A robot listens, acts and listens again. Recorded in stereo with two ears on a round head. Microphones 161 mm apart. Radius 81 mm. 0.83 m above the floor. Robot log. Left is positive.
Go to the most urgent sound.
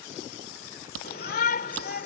note: The shout: about 50° left or 130° left.
cmd yaw +50
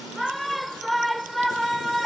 cmd fwd 1.0
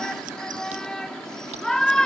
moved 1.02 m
cmd fwd 1.0
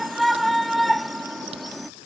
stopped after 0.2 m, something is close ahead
end: Arrived at the shout, straight ahead.